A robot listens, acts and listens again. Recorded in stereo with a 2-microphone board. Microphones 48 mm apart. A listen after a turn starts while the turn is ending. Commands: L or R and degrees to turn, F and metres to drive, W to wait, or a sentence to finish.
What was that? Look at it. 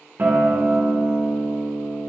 R40
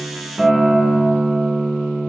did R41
Facing the guitar, 1 to 2 m away.